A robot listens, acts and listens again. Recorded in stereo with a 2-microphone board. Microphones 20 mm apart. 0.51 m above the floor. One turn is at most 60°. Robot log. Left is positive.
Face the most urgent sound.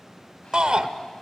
note: The shout: about 50° right or 130° right.
cmd yaw -50
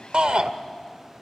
note: So it is at 70° right.
cmd yaw -60
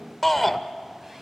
end: Found it: a shout, straight ahead.